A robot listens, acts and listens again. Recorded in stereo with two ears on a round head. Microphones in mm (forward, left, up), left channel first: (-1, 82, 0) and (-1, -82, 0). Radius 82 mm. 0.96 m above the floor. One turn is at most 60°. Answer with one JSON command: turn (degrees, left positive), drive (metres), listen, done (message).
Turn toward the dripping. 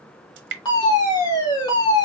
{"turn": -60}
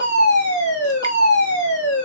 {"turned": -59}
{"listen": true}
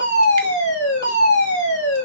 {"listen": true}
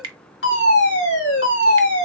{"turn": -30}
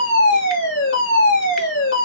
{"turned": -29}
{"listen": true}
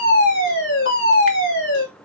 {"listen": true}
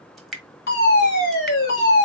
{"done": "Facing the dripping, 1 to 2 m away."}